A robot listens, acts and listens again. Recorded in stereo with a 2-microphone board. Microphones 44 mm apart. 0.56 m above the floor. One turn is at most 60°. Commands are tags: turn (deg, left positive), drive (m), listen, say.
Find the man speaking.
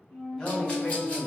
<turn deg="20"/>
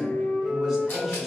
<say>Found it: a man speaking, straight ahead.</say>